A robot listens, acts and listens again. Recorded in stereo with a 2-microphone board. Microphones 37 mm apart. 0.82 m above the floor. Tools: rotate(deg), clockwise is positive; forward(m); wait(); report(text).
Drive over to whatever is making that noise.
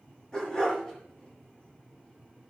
rotate(-20)
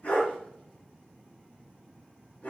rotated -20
rotate(-140)
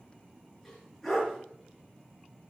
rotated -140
forward(1.0)
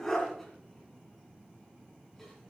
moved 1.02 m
forward(1.0)
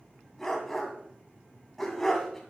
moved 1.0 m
forward(1.0)
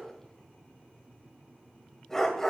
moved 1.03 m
rotate(-10)
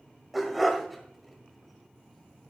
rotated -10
forward(1.0)
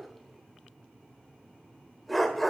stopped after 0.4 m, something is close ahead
report("I am next to the dog barking.")